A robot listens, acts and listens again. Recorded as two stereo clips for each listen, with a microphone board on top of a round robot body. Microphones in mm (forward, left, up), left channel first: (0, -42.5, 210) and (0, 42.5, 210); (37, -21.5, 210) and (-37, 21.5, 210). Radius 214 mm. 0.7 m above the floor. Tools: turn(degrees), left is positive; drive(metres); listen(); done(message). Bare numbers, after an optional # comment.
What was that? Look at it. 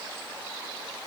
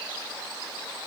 listen()
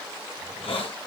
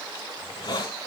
# The hiss: 75° right.
turn(-75)
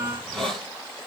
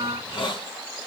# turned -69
done("Found it: a hiss, straight ahead.")